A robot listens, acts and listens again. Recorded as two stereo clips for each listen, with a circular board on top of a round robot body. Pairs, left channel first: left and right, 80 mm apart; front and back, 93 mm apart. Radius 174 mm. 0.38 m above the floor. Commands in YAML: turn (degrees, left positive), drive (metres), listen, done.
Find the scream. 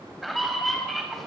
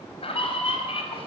done: "Facing the scream."